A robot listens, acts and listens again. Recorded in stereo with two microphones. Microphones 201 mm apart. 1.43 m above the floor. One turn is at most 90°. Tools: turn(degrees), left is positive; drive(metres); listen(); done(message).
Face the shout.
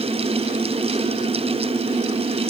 listen()
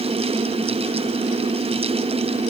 listen()
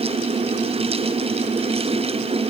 done("I can't make out a shout.")